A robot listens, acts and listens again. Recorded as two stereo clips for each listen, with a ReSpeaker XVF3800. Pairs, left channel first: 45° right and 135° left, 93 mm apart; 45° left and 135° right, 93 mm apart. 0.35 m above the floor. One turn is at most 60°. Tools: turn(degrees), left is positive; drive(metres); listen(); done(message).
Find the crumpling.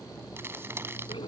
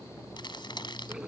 turn(degrees=60)
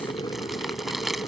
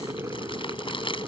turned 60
turn(degrees=45)
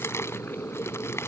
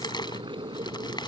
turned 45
turn(degrees=15)
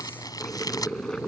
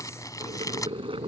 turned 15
done("Facing the crumpling.")